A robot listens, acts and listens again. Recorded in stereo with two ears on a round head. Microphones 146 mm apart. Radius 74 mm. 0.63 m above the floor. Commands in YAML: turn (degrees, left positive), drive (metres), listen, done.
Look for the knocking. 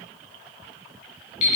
listen: true
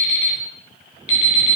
listen: true
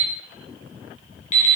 done: "I can't make out knocking, only an alarm clock."